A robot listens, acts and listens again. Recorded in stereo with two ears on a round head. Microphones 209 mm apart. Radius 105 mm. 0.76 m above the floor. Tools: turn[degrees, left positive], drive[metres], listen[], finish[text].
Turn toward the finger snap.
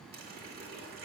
Action: listen[]
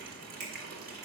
Action: turn[-90]
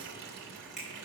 Action: finish[Facing the finger snap.]